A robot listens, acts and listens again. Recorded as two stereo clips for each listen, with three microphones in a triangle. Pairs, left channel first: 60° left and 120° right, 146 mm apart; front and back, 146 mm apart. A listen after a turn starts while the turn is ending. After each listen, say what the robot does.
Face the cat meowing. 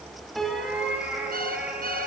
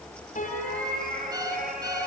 Turn 160° left.
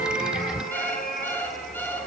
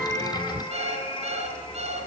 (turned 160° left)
Turn 55° left.
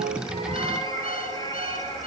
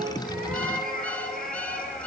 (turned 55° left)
Facing the cat meowing.